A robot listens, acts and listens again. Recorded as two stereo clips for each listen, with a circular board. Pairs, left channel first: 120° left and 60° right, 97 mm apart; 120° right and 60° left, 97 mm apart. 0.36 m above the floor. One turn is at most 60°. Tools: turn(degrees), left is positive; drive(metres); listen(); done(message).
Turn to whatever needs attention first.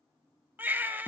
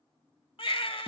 turn(degrees=-60)
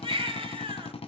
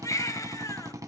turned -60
turn(degrees=-60)
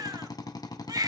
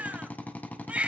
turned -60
turn(degrees=-15)
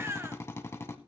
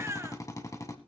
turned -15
done("Facing the baby crying, 1 to 2 m away.")